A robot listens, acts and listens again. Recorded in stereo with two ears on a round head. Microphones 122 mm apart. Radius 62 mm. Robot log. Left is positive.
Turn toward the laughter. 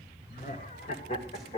note: The laughter: about 40° left or 140° left.
cmd yaw +40
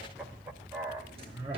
note: So it is at 25° right.
cmd yaw -25
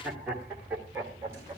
note: The laughter is now 20° right.
cmd yaw -20
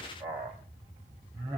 note: The laughter is now 20° right.
cmd yaw -20
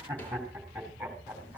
note: The laughter is now 10° right.
cmd yaw -10
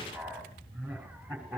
end: Found it: laughter, straight ahead.